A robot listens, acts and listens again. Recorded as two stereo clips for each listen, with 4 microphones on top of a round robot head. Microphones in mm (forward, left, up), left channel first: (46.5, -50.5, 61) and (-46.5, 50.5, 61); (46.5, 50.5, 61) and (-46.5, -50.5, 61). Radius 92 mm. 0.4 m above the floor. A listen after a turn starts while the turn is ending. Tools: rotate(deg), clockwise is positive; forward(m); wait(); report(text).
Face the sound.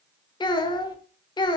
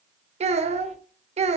rotate(100)
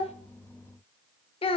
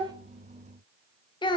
report("Facing the child speaking, under 1 m away.")